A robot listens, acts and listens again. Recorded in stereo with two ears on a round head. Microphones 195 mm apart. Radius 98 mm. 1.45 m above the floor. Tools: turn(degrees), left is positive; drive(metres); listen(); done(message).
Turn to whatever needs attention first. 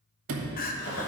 turn(degrees=45)
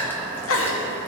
turn(degrees=85)
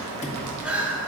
done("Facing the crying, under 1 m away.")